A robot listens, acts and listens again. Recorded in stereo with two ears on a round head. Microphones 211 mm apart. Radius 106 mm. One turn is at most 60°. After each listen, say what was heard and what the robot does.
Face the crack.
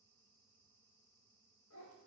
Keep listening.
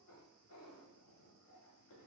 Keep listening.
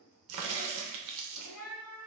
The crack: about 75° right or 105° right. Turn 60° right.
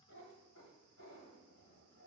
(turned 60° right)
Keep listening.
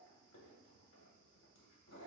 I heard a crack, but can't make it out now. It was about 15° right or 45° right.